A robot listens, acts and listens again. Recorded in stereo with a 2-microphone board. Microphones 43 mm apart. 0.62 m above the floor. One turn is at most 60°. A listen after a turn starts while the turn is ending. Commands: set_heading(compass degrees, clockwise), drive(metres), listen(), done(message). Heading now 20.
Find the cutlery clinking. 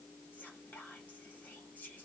listen()
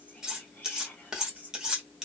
set_heading(50)
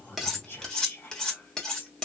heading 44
set_heading(34)
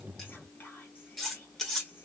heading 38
done("Facing the cutlery clinking.")